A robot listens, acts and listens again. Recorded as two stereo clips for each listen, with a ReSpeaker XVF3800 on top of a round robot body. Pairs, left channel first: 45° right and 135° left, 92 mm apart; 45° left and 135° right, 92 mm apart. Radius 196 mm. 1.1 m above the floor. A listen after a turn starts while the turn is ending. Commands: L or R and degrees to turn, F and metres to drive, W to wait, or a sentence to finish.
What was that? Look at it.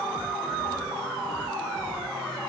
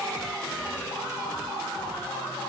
W
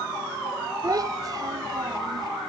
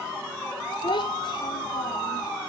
L85
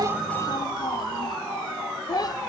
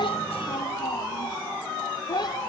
Found it: a child speaking, straight ahead.